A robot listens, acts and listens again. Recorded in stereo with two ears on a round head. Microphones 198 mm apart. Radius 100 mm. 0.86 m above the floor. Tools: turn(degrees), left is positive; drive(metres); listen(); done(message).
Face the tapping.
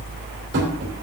turn(degrees=-55)
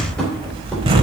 done("Facing the tapping, 2 to 4 m away.")